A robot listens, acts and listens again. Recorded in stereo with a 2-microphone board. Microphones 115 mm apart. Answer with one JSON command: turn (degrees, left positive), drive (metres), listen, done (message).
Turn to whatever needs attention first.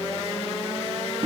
{"listen": true}
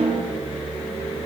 {"listen": true}
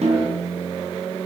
{"done": "I can't make out anything urgent to turn to."}